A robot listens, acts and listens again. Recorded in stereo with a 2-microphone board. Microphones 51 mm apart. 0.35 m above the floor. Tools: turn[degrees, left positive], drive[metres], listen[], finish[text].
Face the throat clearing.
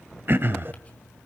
Thought: The throat clearing: about 50° right or 130° right.
Action: turn[-50]
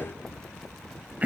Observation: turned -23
Thought: So it is at 40° right.
Action: turn[-40]
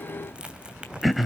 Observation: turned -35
Action: finish[Facing the throat clearing, under 1 m away.]